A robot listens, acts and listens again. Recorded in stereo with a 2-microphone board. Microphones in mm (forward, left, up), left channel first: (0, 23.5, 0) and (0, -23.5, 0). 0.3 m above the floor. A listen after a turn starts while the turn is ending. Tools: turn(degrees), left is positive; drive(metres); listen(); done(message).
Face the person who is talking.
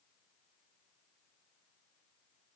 listen()
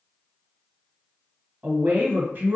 turn(degrees=-40)
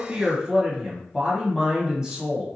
turn(degrees=-15)
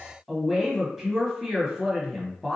done("Found it: a woman speaking, straight ahead, 1 to 2 m away.")